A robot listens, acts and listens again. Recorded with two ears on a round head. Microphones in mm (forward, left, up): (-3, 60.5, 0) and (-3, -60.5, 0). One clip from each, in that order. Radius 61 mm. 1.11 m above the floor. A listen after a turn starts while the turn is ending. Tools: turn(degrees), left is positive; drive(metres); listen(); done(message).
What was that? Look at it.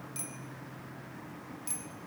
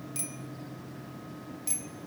turn(degrees=-15)
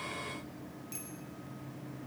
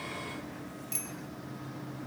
turn(degrees=-150)
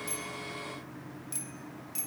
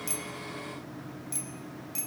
done("Found it: a bicycle bell, straight ahead.")